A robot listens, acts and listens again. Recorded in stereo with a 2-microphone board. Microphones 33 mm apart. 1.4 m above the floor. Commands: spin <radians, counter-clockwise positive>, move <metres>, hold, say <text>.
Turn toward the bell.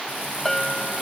spin 0.52
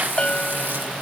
spin 2.53
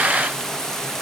hold
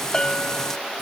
spin 0.52
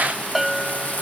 say Found it: a bell, straight ahead.